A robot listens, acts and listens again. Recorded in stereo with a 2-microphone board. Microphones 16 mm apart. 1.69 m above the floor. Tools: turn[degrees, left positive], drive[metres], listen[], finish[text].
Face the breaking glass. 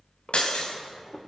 Thought: The breaking glass: about 70° left or 110° left.
Action: turn[70]
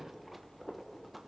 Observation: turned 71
Action: listen[]
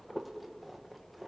Action: finish[I heard breaking glass, but can't make it out now. It was about straight ahead or 40° left.]